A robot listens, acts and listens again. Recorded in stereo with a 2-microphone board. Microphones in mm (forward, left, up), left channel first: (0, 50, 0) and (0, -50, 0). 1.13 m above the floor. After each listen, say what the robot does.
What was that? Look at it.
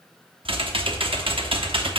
Turn 60° right.
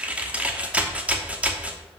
Turn 15° right.
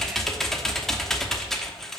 Found it: typing on a keyboard, straight ahead, 1 to 2 m away.